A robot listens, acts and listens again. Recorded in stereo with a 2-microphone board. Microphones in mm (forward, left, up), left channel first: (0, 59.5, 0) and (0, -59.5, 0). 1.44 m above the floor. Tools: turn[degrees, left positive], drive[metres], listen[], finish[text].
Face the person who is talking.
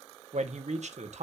Thought: The man speaking: about 75° right or 105° right.
Action: turn[-75]
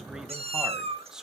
Action: finish[Facing the man speaking, 1 to 2 m away.]